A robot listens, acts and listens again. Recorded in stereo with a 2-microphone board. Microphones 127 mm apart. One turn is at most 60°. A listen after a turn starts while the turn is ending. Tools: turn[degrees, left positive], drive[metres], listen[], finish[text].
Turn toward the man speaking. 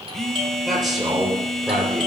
Action: turn[30]
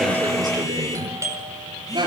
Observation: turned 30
Thought: So it is at 35° right.
Action: turn[-35]
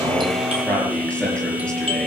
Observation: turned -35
Thought: The man speaking is now 10° left.
Action: turn[10]
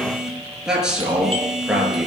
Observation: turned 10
Action: finish[Found it: a man speaking, straight ahead, over 4 m away.]